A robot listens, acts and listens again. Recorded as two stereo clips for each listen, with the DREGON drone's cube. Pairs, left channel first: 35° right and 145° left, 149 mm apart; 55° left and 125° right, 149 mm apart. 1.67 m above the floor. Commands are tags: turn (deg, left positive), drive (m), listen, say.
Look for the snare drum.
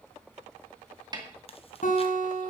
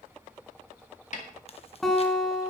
<turn deg="85"/>
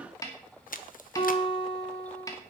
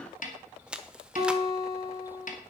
<turn deg="30"/>
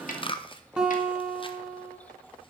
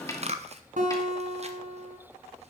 <turn deg="-10"/>
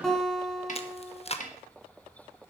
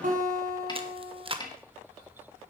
<say>Found it: a snare drum, straight ahead.</say>